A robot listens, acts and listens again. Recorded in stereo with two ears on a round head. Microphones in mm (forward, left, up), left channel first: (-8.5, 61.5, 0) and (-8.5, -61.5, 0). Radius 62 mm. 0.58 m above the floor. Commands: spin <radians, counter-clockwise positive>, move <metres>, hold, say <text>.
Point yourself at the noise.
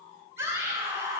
spin -0.35
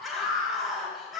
say Facing the scream.